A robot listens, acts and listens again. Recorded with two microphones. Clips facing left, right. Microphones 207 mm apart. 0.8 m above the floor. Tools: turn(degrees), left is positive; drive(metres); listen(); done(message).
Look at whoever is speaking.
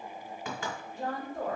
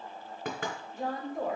turn(degrees=-30)
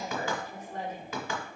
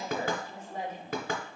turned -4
turn(degrees=-30)
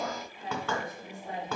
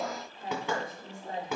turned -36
turn(degrees=-130)
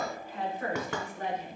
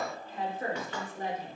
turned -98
turn(degrees=-35)
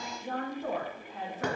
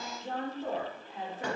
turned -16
turn(degrees=-15)
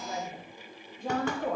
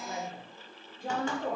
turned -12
done("Found it: a woman speaking, straight ahead.")